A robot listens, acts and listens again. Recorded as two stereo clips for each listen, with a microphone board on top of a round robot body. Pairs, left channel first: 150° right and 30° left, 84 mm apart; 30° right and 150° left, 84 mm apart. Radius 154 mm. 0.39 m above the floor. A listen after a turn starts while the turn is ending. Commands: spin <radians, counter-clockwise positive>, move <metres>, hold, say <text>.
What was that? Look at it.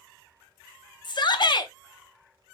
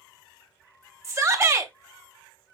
spin -2.79
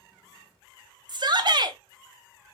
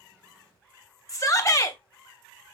spin 0.26
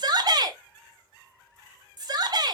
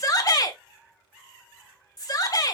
say Found it: a shout, straight ahead, 1 to 2 m away.